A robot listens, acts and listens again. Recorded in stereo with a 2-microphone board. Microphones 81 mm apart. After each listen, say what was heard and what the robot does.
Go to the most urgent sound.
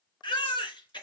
The baby crying: about 70° left or 110° left. Turn 70° left.
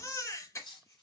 So it is at 40° left. Turn 40° left.
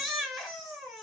Drive 1.0 m forward.
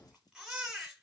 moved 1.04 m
Drive 1.0 m forward.
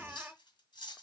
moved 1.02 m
Keep listening.
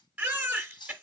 The baby crying is now 25° right. Turn 25° right.
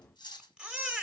The baby crying is now 15° right. Turn 15° right.
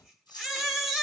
Drive 1.0 m forward.
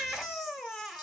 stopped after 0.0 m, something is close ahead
I am next to the baby crying.